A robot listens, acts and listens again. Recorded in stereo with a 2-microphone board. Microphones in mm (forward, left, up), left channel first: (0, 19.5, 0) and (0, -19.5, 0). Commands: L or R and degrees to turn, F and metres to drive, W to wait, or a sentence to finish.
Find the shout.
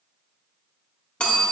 W
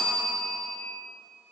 W
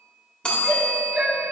R40
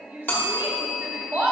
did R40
R100
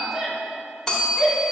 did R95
Facing the shout.